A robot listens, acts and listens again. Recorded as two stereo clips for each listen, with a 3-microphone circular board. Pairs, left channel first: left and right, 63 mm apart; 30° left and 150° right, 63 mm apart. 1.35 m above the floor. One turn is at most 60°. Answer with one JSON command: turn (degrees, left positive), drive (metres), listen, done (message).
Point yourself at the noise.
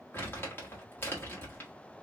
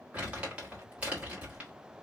{"turn": 60}
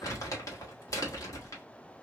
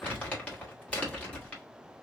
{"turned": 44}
{"turn": 60}
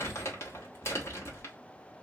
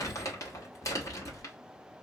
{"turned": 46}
{"turn": 50}
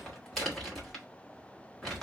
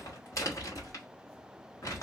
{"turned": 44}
{"done": "Facing the crumpling."}